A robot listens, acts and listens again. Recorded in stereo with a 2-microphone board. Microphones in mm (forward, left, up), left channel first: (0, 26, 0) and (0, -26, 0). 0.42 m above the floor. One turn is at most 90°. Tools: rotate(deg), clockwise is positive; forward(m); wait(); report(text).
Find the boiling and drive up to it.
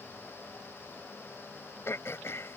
wait()
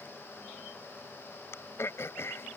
wait()
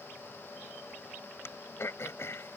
report("I can't make out boiling, only throat clearing.")